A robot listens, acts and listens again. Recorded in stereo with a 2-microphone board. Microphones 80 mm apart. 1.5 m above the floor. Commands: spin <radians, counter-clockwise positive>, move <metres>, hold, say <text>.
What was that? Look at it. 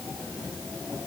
hold
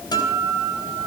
spin 1.05
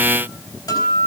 spin 1.05
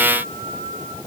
spin 0.26
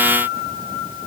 say Facing the guitar, over 4 m away.